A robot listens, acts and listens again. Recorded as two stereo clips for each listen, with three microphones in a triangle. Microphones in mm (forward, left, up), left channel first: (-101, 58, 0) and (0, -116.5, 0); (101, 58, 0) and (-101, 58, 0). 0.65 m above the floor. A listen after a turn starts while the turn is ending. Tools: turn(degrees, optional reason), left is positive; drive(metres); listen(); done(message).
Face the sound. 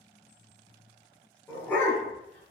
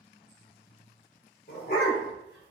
turn(degrees=40, reason="The dog barking: 40° left.")
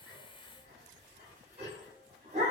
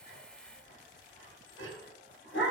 done("Found it: a dog barking, straight ahead.")